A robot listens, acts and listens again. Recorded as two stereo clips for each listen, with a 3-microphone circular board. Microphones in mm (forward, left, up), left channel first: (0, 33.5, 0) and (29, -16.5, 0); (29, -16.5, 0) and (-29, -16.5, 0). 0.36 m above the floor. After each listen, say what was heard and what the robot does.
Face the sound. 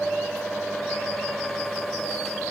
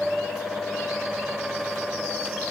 Keep listening.
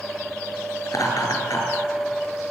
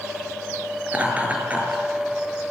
The laughter: 115° left. Turn 115° left.
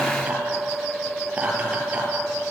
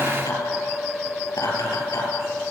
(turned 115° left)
The laughter is now 10° left. Turn 10° left.
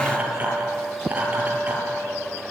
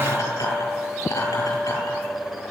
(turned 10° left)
Facing the laughter, over 4 m away.